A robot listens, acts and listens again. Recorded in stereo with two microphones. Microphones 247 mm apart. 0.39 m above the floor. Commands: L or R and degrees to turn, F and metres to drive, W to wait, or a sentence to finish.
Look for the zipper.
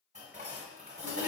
W
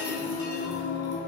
W
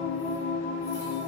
I can't make out a zipper, only singing and dishes clattering.